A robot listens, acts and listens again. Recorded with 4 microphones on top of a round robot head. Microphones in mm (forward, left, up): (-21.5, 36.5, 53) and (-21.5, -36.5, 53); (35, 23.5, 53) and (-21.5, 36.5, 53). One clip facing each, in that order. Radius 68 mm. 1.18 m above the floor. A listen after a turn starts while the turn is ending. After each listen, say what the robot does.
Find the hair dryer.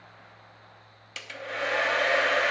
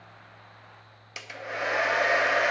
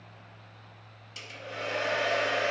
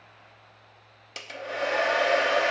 Turn 170° right.
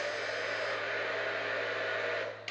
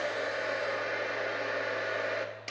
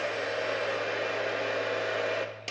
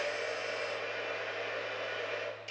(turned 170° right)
Turn 15° right.
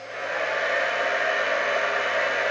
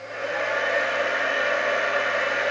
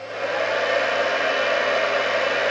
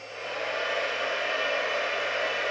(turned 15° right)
Facing the hair dryer.